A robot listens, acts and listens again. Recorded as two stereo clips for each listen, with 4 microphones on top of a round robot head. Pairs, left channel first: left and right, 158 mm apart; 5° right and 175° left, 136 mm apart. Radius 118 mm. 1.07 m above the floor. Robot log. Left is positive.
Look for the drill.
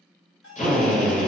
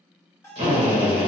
note: The drill: 130° left.
cmd yaw +130
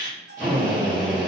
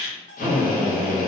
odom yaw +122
note: The drill is now 10° left.
cmd yaw +10
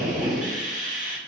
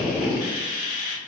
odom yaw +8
end: Found it: a drill, straight ahead, 1 to 2 m away.